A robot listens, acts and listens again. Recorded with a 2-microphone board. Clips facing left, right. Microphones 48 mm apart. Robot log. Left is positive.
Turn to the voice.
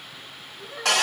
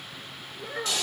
cmd yaw -90
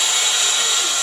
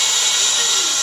cmd idle
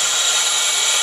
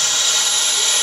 cmd idle
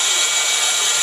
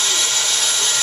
end: I heard a child speaking from this way, but can't make it out now.